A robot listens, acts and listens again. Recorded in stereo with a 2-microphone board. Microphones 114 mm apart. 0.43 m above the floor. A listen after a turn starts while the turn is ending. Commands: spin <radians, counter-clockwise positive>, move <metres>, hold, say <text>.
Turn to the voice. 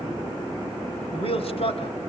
spin 0.96
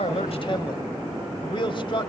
spin 0.96
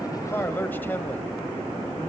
spin 0.35
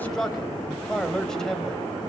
say Facing the man speaking.